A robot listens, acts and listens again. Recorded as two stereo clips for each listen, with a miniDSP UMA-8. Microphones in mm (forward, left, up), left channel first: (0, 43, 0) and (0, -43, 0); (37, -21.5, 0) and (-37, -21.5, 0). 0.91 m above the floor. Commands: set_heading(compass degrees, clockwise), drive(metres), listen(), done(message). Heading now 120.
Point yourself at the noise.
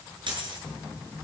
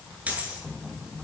set_heading(230)
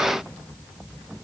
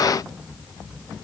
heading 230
done("I heard a dropped coin from this way, but can't make it out now.")